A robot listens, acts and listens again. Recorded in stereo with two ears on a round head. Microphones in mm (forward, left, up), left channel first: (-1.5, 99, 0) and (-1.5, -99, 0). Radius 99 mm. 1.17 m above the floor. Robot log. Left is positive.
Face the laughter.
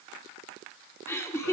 cmd yaw +30
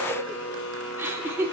note: So it is at 10° right.
cmd yaw -10
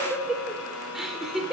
end: Found it: laughter, straight ahead.